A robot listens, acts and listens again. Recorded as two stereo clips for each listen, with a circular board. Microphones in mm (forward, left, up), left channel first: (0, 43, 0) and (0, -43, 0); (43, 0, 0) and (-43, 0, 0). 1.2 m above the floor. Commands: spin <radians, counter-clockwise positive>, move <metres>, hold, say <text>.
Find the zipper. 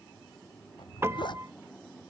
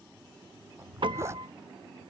spin 2.09
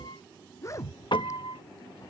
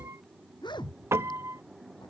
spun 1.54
spin 0.61
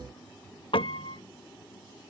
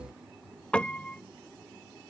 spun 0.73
spin -0.17
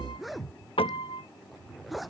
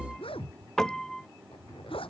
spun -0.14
say Facing the zipper.